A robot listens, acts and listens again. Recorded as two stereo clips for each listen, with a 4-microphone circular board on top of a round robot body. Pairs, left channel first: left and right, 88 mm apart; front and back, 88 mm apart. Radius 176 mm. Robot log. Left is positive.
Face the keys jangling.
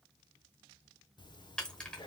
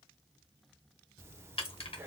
note: The keys jangling: 10° left.
cmd yaw +10
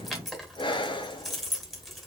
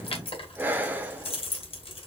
end: Facing the keys jangling, 2 to 4 m away.